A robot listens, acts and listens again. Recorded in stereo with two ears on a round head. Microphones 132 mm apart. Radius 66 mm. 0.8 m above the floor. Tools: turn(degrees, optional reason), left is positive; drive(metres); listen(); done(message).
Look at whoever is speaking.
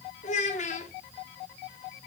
turn(degrees=50, reason="The child speaking: about 50° left or 130° left.")
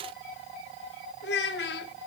turn(degrees=80, reason="So it is at 80° left.")
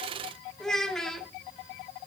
done("Found it: a child speaking, straight ahead.")